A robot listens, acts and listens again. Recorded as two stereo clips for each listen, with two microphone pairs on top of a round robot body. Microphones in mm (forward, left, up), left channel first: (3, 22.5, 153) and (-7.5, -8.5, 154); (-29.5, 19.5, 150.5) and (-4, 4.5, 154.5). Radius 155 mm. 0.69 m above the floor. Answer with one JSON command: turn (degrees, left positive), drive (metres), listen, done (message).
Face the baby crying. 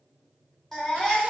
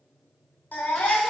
{"turn": 150}
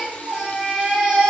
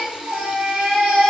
{"turn": -35}
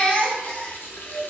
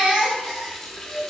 {"done": "Found it: a baby crying, straight ahead, under 1 m away."}